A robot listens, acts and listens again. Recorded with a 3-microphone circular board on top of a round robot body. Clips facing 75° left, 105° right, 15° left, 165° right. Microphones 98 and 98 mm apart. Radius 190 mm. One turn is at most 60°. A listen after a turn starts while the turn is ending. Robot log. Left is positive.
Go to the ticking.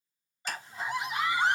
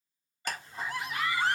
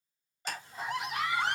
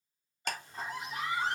note: The ticking: 135° right.
cmd yaw -60
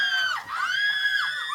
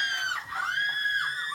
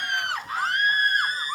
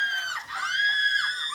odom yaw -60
note: Nothing new. It was at 75° right.
cmd yaw -60
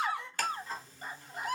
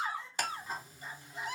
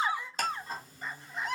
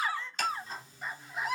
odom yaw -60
note: The ticking is now 30° right.
cmd yaw -30
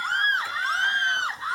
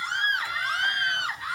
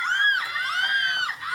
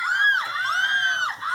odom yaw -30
cmd idle
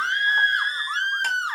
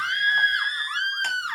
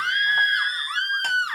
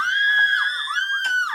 cmd idle
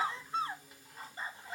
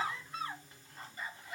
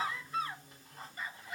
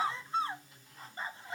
cmd fwd 1.0
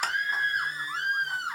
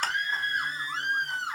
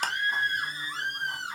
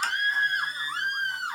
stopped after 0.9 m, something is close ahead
cmd idle
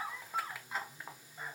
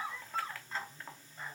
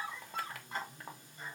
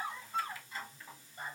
end: Arrived at the ticking, straight ahead.